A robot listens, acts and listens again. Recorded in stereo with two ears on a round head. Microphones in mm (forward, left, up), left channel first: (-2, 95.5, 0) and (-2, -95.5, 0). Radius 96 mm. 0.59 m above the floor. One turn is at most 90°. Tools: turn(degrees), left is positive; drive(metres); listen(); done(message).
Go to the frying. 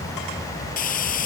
turn(degrees=40)
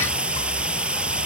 drive(metres=1.0)
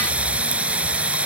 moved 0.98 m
drive(metres=1.0)
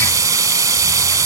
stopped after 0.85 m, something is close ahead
turn(degrees=-15)
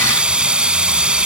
done("Arrived at the frying, straight ahead.")